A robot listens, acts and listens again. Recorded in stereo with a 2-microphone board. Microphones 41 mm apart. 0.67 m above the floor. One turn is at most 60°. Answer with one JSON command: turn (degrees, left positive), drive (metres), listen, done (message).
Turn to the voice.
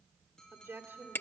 {"turn": -60}
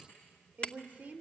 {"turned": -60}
{"turn": -35}
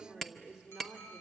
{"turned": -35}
{"turn": -10}
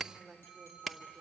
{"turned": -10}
{"done": "Facing the woman speaking, 2 to 4 m away."}